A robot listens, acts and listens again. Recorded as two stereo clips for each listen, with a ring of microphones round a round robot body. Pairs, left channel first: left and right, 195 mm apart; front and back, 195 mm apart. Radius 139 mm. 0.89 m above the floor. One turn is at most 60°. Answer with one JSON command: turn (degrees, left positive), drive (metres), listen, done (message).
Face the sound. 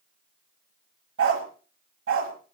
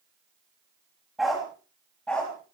{"turn": -60}
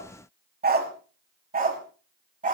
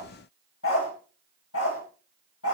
{"turn": -45}
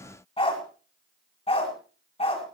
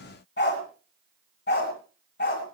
{"turn": 30}
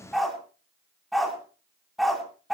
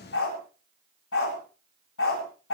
{"done": "Facing the dog barking, over 4 m away."}